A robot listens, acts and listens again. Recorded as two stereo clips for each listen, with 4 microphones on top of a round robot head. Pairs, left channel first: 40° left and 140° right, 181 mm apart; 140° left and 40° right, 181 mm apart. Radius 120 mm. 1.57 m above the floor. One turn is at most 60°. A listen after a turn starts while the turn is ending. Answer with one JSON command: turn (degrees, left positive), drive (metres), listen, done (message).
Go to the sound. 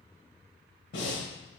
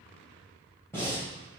{"turn": 60}
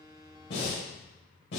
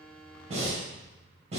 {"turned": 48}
{"turn": 20}
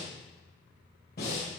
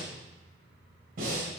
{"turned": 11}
{"drive": 1.0}
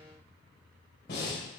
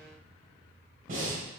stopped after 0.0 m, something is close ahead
{"turn": 10}
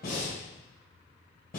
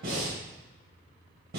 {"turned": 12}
{"done": "Something is in my way. I am facing the breathing but have not reached it."}